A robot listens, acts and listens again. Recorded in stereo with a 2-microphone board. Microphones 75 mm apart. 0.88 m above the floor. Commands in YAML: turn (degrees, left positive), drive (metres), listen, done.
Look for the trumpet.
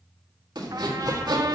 turn: -55
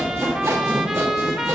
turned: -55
turn: -10
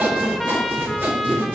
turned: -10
done: "Found it: a trumpet, straight ahead."